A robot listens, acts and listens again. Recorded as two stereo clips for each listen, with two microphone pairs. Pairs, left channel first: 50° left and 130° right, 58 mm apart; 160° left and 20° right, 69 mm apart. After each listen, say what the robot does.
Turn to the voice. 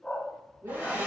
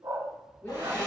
Turn 145° right.
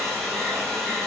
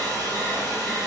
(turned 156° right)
Turn 15° left.
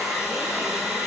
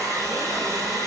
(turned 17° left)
Keep listening.
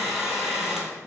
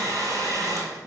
Facing where the woman speaking came from. I can't hear it now.